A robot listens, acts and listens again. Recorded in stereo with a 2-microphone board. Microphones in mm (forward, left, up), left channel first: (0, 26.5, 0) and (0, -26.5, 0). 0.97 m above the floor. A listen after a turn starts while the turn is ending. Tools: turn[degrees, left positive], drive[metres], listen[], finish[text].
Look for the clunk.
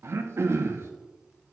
Action: listen[]
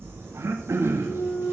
Thought: The clunk: about 40° left or 140° left.
Action: turn[40]
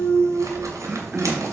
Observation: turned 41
Action: listen[]
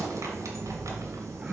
Action: finish[I heard a clunk, but can't make it out now. It was about straight ahead or 95° left.]